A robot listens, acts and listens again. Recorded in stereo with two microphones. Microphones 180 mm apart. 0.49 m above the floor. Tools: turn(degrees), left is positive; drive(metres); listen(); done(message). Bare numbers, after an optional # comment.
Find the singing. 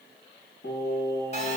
# The singing: about 70° left or 110° left.
turn(70)
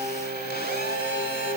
# So it is at 50° left.
turn(50)
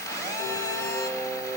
# The singing is now 10° left.
turn(10)
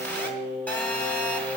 done("Found it: singing, straight ahead, over 4 m away.")